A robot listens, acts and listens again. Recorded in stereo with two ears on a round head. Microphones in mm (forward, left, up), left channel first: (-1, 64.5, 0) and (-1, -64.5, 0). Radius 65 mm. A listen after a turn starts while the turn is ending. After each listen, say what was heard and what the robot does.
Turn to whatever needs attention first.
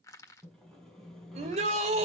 The shout: about 50° right or 130° right. Turn 50° right.
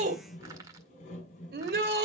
So it is at 80° right. Turn 80° right.
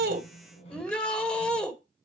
Facing the shout.